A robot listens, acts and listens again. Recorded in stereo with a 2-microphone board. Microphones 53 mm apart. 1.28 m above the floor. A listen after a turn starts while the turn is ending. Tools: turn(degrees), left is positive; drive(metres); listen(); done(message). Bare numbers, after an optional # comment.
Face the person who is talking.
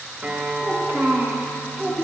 # The child speaking: about 35° right or 145° right.
turn(-35)
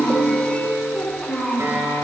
# So it is at 20° left.
turn(20)
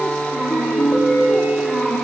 # The child speaking is now 10° left.
turn(10)
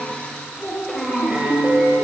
done("Found it: a child speaking, straight ahead.")